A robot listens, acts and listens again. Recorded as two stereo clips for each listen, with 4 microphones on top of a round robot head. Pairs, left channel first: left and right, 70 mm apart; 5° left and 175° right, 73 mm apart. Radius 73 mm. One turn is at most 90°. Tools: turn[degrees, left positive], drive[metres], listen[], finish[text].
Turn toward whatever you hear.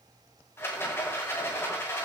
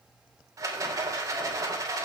Thought: The rattle: 145° left.
Action: turn[90]
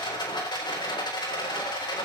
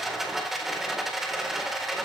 Thought: The rattle is now 100° left.
Action: turn[90]
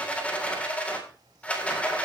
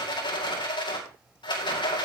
Thought: The rattle is now 15° left.
Action: turn[15]
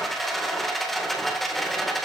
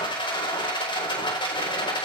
Action: finish[Found it: a rattle, straight ahead, 2 to 4 m away.]